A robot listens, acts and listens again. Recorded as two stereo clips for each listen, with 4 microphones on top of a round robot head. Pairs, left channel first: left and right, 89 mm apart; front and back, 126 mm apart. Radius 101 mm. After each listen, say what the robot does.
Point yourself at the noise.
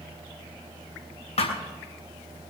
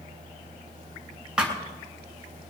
Turn 95° left.
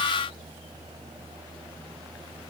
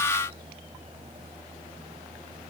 I heard a thud from this way, but can't make it out now.